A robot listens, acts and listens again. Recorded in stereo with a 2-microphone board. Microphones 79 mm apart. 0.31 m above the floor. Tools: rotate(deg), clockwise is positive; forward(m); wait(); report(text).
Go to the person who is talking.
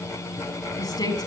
rotate(-60)
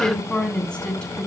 rotate(-15)
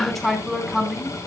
forward(1.0)
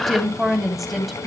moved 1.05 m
forward(1.0)
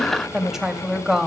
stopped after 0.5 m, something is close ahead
report("I am next to the woman speaking.")